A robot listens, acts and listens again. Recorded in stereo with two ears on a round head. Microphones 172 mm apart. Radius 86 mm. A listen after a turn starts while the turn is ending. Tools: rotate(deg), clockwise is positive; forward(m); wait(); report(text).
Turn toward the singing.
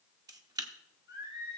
rotate(25)
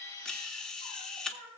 rotate(130)
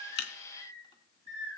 rotate(-30)
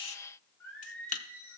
rotate(-15)
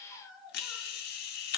report("Facing the singing.")